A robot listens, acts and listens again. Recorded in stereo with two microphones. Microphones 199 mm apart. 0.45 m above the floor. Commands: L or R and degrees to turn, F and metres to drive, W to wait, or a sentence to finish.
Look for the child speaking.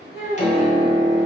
L55
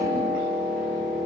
W
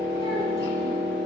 W
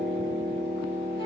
I heard a child speaking, but can't make it out now. It was about straight ahead or 70° left.